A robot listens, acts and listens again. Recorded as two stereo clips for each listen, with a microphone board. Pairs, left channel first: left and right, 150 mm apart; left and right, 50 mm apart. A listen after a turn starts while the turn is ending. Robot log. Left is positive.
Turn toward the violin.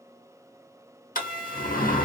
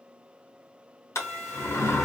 cmd yaw +30
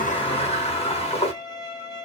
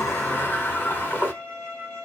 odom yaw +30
note: So it is at 150° left.
cmd yaw +150
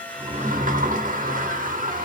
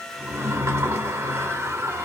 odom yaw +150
cmd idle
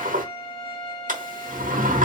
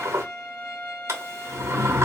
note: The violin is now 40° left.
cmd yaw +40
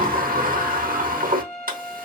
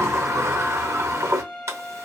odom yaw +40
end: Found it: a violin, straight ahead.